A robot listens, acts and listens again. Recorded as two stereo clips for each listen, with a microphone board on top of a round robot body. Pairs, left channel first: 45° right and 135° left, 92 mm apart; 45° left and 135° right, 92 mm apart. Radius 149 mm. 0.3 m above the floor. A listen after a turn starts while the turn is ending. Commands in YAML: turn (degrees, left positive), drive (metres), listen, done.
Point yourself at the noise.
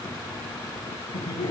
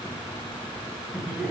turn: -45
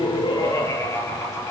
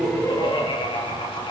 turn: 15
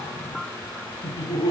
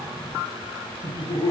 done: "Found it: laughter, straight ahead."